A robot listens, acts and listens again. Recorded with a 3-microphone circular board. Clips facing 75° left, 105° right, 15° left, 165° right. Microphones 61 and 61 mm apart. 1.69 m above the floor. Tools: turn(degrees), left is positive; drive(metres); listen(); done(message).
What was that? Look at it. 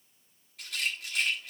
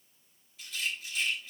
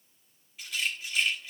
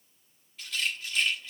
turn(degrees=90)
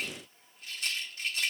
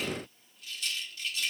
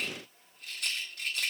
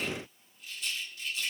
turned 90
turn(degrees=30)
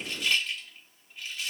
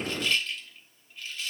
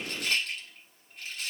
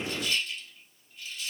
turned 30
done("Facing the rattle.")